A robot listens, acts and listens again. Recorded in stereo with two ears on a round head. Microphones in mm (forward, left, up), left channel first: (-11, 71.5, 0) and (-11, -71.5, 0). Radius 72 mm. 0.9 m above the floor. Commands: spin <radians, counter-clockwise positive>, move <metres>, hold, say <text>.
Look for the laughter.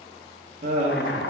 spin -0.70
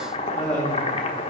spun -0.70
say Found it: laughter, straight ahead, 1 to 2 m away.